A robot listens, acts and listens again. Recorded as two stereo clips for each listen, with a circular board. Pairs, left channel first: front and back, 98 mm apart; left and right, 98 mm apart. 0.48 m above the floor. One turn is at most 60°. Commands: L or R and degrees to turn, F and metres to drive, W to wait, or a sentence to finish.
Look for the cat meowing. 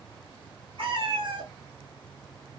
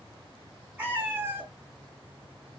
R60
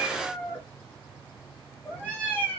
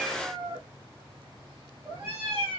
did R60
R60
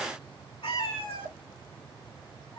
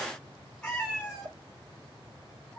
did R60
L15
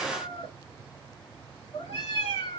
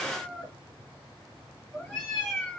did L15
Facing the cat meowing, 2 to 4 m away.